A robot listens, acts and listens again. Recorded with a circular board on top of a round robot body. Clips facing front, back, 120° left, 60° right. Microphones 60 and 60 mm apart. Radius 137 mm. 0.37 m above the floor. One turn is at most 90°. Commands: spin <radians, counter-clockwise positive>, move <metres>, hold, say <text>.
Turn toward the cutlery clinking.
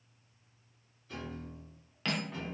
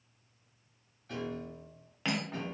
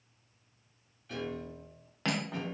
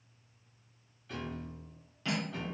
spin 1.57
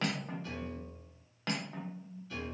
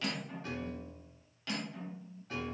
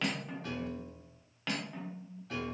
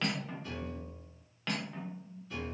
spin 0.52
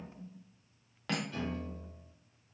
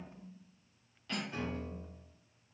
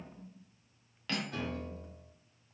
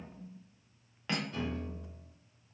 say Found it: cutlery clinking, straight ahead.